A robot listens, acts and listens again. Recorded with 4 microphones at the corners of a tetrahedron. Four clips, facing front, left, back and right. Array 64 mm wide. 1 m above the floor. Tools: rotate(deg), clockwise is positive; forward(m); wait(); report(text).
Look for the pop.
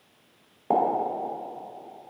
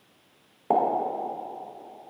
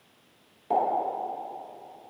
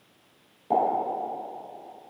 rotate(-55)
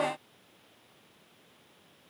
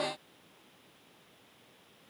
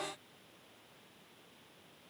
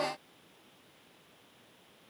report("I heard a pop from this way, but can't make it out now.")